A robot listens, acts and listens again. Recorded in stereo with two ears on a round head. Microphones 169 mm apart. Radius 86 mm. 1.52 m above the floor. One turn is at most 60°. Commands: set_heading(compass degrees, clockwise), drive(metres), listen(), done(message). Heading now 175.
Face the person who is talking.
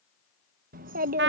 set_heading(220)
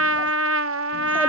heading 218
listen()
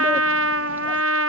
listen()
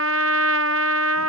done("I heard a child speaking, but can't make it out now. It was about straight ahead or 90° right.")